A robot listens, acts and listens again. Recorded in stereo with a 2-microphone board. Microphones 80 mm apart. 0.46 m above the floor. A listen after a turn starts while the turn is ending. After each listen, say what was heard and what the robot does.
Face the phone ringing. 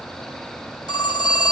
The phone ringing: about 65° left or 115° left. Turn 65° left.
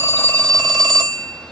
Found it: a phone ringing, straight ahead, 1 to 2 m away.